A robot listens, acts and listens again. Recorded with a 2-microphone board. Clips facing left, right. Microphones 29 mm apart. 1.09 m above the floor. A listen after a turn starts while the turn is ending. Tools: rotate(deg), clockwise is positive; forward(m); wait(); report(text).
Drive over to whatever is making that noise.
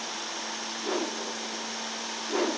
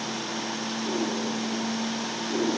rotate(-90)
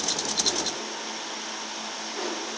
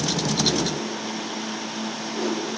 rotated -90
rotate(-10)
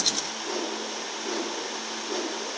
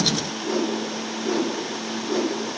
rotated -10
forward(1.0)
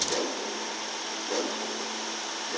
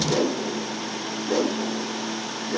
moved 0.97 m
forward(1.0)
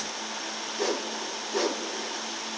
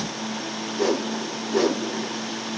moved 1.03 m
forward(1.0)
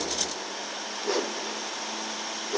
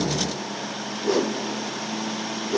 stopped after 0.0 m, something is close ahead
report("I am next to the whoosh.")